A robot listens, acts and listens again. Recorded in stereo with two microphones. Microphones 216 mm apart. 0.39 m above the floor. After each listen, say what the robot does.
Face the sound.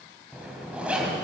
Turn 30° right.
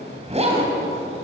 Turn 145° right.
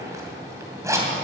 Turn 15° right.
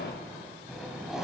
Facing the zipper, 2 to 4 m away.